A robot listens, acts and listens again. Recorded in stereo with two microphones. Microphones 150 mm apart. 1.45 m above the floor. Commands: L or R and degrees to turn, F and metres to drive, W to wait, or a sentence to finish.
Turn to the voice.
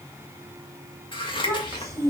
R20
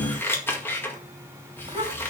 R140
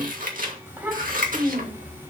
R10
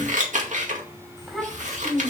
Facing the child speaking.